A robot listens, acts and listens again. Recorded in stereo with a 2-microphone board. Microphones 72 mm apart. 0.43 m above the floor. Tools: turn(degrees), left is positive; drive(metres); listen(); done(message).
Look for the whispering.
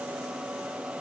listen()
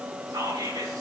turn(degrees=-60)
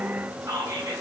turn(degrees=-55)
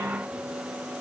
listen()
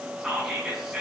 turn(degrees=-10)
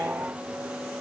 listen()
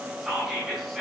done("Facing the whispering, over 4 m away.")